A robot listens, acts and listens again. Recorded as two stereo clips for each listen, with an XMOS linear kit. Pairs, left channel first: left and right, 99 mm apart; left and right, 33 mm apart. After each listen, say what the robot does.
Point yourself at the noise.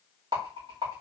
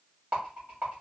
Turn 55° right.
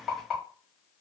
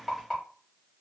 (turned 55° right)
Facing the rattle.